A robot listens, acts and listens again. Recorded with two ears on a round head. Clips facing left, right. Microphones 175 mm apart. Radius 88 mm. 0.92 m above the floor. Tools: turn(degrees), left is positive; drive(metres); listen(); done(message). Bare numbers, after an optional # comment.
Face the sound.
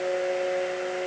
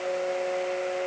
listen()
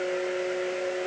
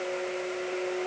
listen()
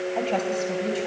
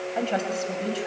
turn(-30)
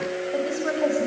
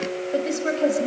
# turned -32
# So it is at 150° right.
turn(-150)
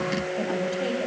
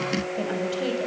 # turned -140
# The woman speaking is now 15° right.
turn(-15)
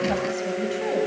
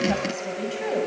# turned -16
done("Facing the woman speaking, over 4 m away.")